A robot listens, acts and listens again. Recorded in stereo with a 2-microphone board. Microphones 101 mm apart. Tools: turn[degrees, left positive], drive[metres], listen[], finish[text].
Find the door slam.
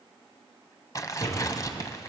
Action: turn[90]
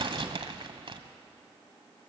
Action: finish[Facing where the door slam came from. I can't hear it now.]